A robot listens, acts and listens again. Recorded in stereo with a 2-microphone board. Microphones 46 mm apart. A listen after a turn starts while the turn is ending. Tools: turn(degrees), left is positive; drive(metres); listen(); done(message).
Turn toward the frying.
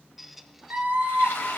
turn(degrees=90)
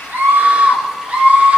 listen()
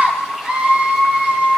listen()
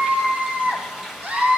turn(degrees=-10)
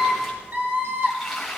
done("Facing the frying.")